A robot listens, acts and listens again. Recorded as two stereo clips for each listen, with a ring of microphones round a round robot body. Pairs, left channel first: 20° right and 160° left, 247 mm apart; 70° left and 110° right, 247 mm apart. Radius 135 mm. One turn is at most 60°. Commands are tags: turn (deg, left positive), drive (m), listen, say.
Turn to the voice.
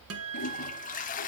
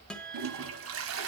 <listen/>
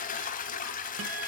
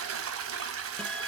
<listen/>
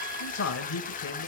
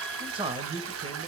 <turn deg="-45"/>
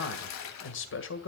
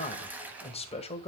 <say>Facing the man speaking, 1 to 2 m away.</say>